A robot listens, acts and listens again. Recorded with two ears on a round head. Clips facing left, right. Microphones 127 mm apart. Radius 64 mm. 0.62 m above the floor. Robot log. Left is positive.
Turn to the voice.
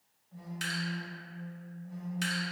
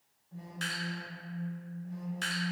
cmd idle
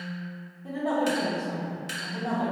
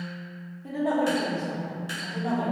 note: The woman speaking: about 20° right or 160° right.
cmd yaw -20
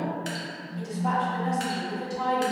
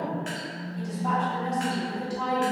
end: Found it: a woman speaking, straight ahead, under 1 m away.